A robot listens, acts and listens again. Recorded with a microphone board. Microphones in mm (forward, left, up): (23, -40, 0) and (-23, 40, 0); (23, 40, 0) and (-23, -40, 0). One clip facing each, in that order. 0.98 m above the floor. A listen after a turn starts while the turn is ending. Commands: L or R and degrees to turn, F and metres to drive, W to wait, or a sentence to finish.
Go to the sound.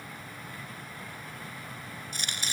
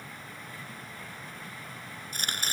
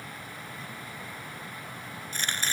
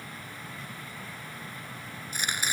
L160
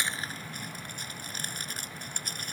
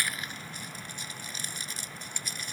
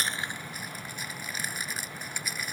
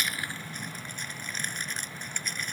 R25
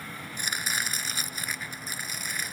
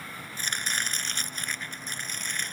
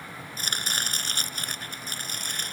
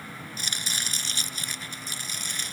L20
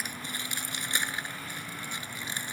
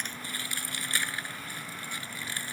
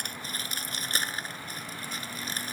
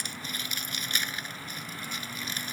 L10
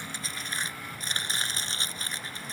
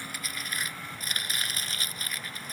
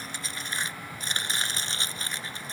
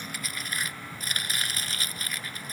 F1.0
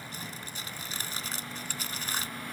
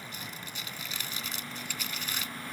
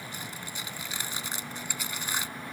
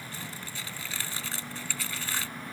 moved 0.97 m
R10
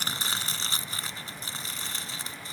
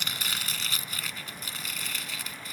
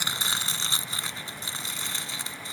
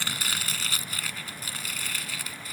F1.0
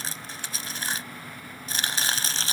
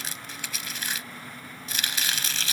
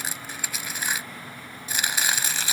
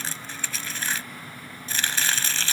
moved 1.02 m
R15
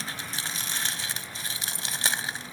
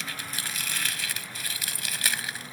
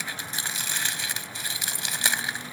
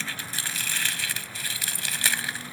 F1.0
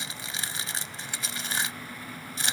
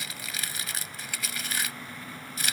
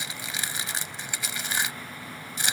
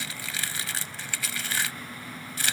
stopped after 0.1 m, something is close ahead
Arrived at the chopping, straight ahead.